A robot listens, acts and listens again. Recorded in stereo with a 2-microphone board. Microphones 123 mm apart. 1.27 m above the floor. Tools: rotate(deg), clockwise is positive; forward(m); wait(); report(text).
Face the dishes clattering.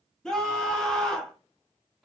wait()
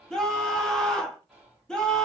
wait()
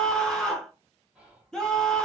report("I can't make out dishes clattering to turn to.")